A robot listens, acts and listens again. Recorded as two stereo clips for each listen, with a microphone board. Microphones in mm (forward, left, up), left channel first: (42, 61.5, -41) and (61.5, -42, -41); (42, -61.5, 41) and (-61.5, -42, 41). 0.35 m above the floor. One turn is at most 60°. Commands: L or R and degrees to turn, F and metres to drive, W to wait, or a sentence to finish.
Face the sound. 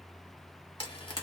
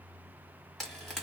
L60
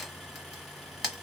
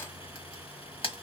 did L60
L10
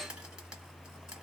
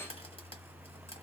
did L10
W
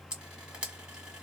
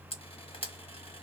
Facing the frying.